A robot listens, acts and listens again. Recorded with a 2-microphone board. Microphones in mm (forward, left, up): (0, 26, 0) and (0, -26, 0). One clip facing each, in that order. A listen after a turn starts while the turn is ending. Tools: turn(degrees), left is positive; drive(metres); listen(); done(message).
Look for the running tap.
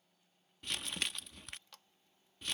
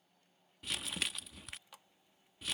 turn(degrees=-30)
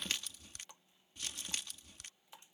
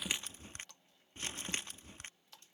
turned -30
turn(degrees=20)
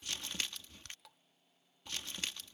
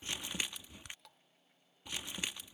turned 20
done("Facing the running tap.")